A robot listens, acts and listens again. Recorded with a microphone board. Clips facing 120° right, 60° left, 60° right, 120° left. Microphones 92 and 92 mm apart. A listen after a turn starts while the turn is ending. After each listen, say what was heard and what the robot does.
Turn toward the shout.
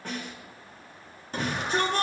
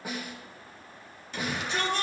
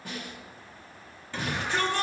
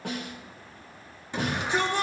The shout: 170° right. Turn 170° right.
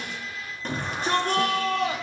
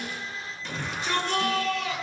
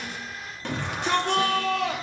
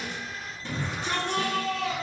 The shout is now 75° right. Turn 75° right.
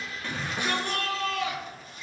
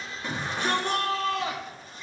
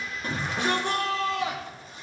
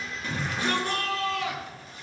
Facing the shout, 2 to 4 m away.